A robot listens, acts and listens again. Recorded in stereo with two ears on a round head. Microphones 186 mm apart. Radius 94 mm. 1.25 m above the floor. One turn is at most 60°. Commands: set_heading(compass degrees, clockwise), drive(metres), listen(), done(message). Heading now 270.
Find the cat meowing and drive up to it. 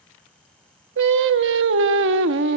listen()
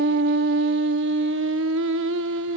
listen()
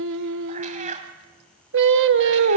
set_heading(310)
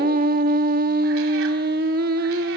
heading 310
listen()
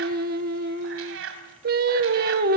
set_heading(10)
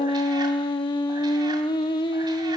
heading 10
set_heading(50)
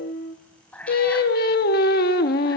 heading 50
drive(1.0)
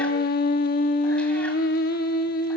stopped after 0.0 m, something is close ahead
listen()
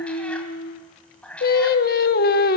done("Blocked. The cat meowing is further on, straight ahead.")